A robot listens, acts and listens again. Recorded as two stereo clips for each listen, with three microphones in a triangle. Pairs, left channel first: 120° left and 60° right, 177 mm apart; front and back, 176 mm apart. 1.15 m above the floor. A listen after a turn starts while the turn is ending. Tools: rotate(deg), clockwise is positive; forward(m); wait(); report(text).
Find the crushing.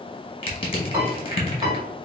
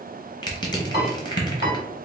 rotate(-65)
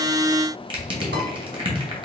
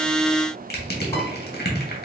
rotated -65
report("Found it: crushing, straight ahead.")